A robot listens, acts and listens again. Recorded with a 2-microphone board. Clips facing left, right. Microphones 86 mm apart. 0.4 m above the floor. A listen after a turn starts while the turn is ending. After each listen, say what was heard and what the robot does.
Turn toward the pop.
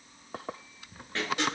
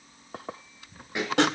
Turn 30° right.
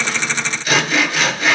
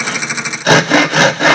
Keep listening.
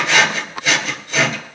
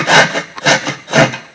I heard a pop, but can't make it out now. It was about 15° left or 135° right.